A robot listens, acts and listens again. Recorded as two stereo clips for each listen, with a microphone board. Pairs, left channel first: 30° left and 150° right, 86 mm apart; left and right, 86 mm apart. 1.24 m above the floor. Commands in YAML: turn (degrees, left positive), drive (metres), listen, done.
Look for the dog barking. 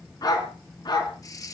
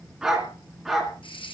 done: "Facing the dog barking, 2 to 4 m away."